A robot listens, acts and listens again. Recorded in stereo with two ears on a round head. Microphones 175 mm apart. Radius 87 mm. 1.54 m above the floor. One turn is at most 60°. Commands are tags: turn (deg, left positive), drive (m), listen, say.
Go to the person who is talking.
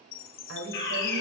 <turn deg="-60"/>
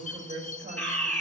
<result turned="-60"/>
<turn deg="-40"/>
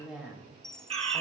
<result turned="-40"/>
<drive m="1.0"/>
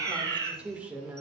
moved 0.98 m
<drive m="1.0"/>
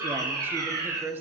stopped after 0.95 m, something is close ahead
<turn deg="-10"/>
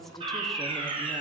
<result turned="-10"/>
<listen/>
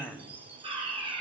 <say>Arrived at the woman speaking, straight ahead.</say>